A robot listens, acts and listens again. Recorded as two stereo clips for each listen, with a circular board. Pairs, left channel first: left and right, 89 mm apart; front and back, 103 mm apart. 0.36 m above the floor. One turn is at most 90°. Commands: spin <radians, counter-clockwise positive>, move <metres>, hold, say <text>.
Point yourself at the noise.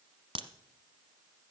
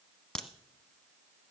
spin -1.48
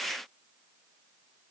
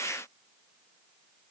say Facing where the crack came from. I can't hear it now.